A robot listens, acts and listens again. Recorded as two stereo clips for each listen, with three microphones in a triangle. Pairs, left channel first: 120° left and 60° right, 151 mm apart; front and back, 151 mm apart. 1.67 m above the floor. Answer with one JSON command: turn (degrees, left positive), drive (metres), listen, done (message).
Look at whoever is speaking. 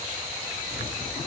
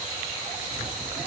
{"listen": true}
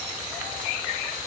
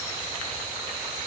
{"listen": true}
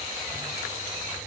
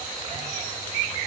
{"done": "I can't make out anyone speaking to turn to."}